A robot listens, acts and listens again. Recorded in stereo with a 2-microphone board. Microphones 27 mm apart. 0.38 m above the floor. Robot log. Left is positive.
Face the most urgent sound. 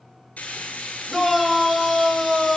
cmd yaw -30
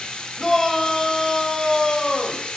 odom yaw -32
note: So it is at 20° left.
cmd yaw +20
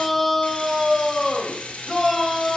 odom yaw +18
end: Facing the shout.